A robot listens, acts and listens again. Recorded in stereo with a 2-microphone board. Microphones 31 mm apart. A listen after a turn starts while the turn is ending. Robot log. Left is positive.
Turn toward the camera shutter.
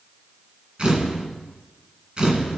note: The camera shutter: about 30° right or 150° right.
cmd yaw -30
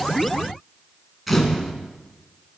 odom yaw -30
end: Facing the camera shutter, 2 to 4 m away.